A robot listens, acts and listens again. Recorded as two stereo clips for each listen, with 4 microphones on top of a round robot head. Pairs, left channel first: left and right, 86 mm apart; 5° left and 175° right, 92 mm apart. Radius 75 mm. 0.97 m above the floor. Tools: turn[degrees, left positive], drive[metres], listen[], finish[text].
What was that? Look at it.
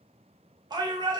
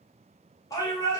Thought: The shout: 50° right.
Action: turn[-50]
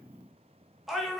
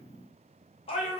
Action: finish[Facing the shout.]